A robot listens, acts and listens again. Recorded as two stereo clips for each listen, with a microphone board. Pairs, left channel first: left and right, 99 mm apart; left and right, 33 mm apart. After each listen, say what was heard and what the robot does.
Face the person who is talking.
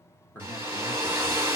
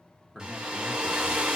The man speaking: about 20° left or 160° left. Turn 20° left.
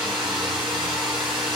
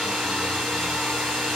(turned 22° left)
Keep listening.
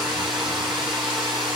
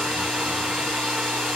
Keep listening.
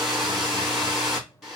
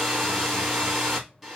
I heard a man speaking, but can't make it out now. It was about 5° right or 140° left.